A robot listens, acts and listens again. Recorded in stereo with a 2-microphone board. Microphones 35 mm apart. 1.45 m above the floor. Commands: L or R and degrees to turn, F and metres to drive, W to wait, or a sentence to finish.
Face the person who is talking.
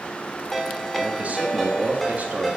R45
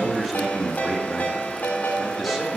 Facing the man speaking.